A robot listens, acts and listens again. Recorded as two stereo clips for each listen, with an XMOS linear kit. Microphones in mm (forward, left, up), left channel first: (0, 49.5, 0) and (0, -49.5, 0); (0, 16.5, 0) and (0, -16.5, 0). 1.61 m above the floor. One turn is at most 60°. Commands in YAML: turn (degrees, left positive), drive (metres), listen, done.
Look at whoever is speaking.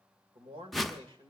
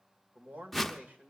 turn: -60
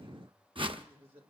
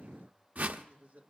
turn: -60
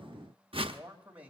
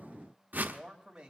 turn: -20
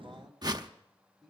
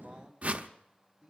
done: "Found it: a man speaking, straight ahead."